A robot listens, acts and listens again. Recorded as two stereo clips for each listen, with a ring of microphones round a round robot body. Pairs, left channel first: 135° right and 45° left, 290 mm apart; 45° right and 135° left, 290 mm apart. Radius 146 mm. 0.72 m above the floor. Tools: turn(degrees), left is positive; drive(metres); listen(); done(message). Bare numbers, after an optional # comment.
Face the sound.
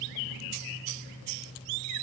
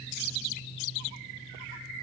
listen()
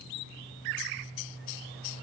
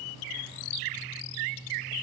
listen()
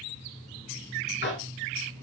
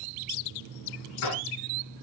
# The tapping: 80° right.
turn(-80)
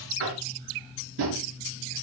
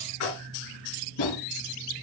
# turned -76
done("Found it: tapping, straight ahead, 2 to 4 m away.")